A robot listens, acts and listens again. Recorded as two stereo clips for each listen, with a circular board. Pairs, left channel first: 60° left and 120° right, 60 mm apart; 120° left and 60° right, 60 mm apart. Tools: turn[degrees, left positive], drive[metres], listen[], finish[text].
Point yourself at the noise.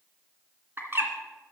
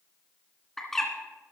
Thought: The bird: 160° right.
Action: turn[-160]
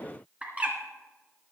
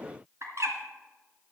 Thought: The bird is now 60° right.
Action: turn[-60]
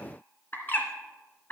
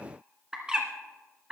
Thought: The bird is now 10° left.
Action: turn[10]
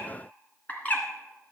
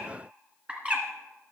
Action: finish[Facing the bird, 2 to 4 m away.]